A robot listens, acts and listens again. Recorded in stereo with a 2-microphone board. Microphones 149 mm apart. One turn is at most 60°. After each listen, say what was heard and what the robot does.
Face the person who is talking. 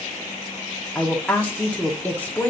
Turn 30° left.
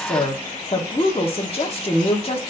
So it is at 140° left. Turn 60° left.
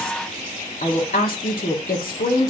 The woman speaking is now 95° left. Turn 60° left.
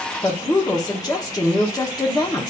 The woman speaking is now 25° left. Turn 25° left.
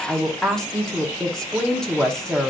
Found it: a woman speaking, straight ahead, 1 to 2 m away.